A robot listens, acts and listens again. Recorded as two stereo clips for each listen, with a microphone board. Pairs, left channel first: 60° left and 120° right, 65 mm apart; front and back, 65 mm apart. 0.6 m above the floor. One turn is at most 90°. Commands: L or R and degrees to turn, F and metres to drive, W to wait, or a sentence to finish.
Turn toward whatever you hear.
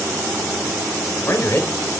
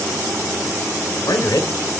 Facing the man speaking.